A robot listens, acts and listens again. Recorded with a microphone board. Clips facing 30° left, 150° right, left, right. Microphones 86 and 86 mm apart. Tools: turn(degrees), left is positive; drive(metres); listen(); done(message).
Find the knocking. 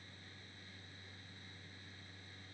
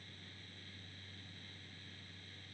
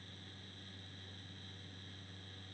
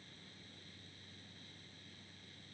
listen()
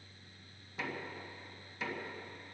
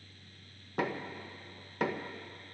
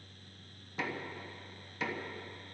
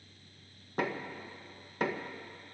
turn(degrees=-130)
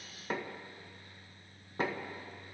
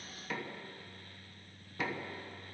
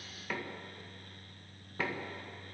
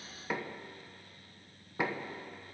turn(degrees=-15)
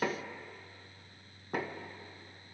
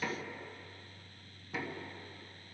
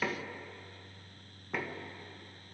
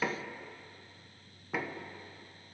done("Facing the knocking, 1 to 2 m away.")